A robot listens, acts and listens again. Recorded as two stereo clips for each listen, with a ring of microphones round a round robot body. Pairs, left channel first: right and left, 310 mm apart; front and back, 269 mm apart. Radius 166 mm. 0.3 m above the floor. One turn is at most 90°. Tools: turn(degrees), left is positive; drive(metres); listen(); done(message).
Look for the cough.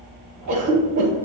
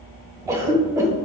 turn(degrees=90)
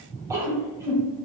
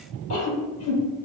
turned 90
turn(degrees=10)
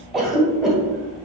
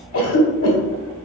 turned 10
done("Found it: a cough, straight ahead.")